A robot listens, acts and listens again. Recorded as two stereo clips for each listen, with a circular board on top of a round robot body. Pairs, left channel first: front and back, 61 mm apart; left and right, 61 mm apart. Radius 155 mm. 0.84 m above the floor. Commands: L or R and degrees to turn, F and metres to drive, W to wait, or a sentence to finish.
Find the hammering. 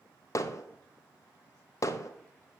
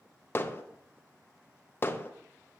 L35
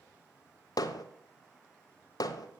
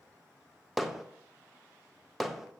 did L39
Facing the hammering, under 1 m away.